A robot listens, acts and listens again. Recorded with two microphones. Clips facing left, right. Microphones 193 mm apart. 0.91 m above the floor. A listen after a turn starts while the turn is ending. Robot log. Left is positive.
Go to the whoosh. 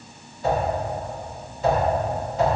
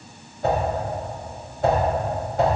note: The whoosh: about 60° right or 120° right.
cmd yaw -60
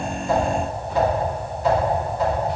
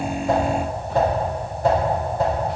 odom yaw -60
note: So it is at 55° right.
cmd yaw -55
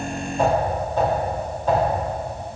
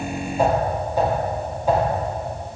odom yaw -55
note: The whoosh is now 10° right.
cmd yaw -10
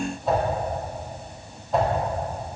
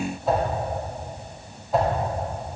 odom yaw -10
cmd fwd 1.0
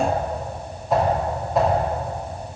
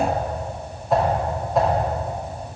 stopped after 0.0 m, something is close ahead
end: Blocked. The whoosh is further on, straight ahead.